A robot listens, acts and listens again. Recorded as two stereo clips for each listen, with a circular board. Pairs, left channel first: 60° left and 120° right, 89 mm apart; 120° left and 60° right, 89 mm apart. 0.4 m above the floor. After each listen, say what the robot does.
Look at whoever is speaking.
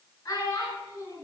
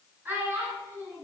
Facing the child speaking.